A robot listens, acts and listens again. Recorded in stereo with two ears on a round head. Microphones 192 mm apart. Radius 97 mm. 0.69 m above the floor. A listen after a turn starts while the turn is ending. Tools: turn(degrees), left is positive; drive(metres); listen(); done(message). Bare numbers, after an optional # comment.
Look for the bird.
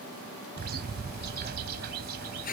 # The bird: about 50° right or 130° right.
turn(-50)
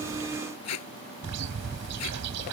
# So it is at 80° right.
turn(-80)
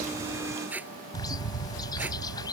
# The bird is now 20° left.
turn(20)
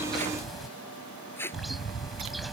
done("Found it: a bird, straight ahead.")